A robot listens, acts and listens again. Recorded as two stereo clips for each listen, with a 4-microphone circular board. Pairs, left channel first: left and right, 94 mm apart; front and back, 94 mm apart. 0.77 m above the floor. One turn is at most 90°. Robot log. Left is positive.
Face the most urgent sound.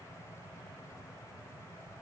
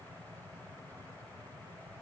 cmd idle
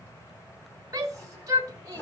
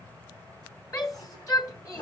note: The shout: 45° right.
cmd yaw -45
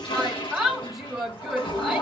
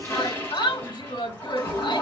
end: Facing the shout.